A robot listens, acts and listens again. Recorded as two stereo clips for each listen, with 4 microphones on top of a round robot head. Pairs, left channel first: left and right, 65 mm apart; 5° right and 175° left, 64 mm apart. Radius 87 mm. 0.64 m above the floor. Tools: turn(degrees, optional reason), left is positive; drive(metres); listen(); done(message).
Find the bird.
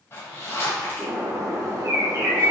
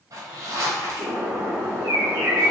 turn(degrees=-135, reason="The bird: 135° right.")
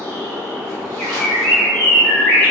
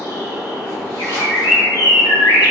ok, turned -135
turn(degrees=15, reason="The bird is now 15° left.")
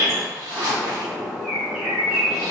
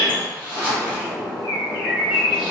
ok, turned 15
done("Facing the bird.")